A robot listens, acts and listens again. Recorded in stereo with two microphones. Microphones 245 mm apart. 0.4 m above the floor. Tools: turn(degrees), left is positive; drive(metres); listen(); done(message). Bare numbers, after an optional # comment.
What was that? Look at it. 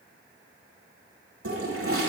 # The toilet flushing: about 60° right or 120° right.
turn(-60)
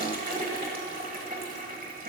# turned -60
# So it is at 40° right.
turn(-40)
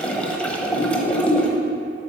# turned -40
done("Facing the toilet flushing.")